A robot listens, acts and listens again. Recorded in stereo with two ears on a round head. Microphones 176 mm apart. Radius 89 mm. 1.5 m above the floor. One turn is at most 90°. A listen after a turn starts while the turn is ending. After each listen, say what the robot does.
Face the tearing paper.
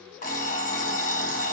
Keep listening.
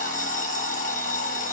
Keep listening.
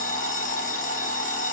I can't make out tearing paper, only an alarm clock.